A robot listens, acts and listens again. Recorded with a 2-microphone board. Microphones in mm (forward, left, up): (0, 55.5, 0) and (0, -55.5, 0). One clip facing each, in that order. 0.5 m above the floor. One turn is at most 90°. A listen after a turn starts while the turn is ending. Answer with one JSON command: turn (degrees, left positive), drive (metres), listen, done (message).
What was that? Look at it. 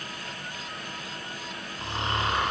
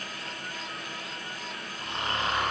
{"turn": 25}
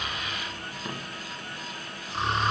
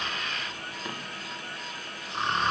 {"done": "Facing the snoring, 2 to 4 m away."}